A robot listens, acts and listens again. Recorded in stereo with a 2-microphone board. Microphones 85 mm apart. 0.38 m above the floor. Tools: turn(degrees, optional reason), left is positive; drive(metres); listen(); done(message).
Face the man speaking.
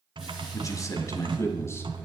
turn(degrees=30, reason="The man speaking: about 30° left or 150° left.")
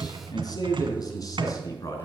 turn(degrees=40, reason="The man speaking: about 40° left or 140° left.")
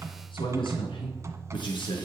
turn(degrees=110, reason="So it is at 110° left.")
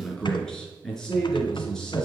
done("Found it: a man speaking, straight ahead, over 4 m away.")